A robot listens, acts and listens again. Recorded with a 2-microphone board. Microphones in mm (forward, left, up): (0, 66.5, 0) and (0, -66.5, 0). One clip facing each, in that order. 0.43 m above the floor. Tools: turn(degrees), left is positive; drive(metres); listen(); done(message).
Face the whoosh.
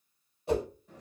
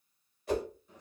turn(degrees=25)
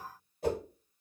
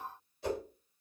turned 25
turn(degrees=130)
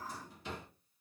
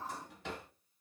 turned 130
listen()
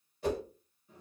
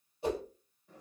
turn(degrees=-20)
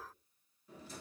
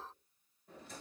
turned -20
listen()
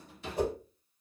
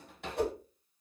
done("Found it: a whoosh, straight ahead.")